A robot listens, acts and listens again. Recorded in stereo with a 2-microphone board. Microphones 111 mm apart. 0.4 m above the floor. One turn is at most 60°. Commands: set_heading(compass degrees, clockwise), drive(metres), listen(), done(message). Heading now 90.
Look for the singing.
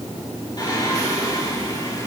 set_heading(55)
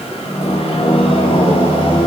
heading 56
set_heading(356)
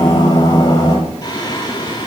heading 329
set_heading(289)
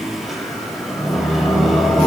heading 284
done("Found it: singing, straight ahead, over 4 m away.")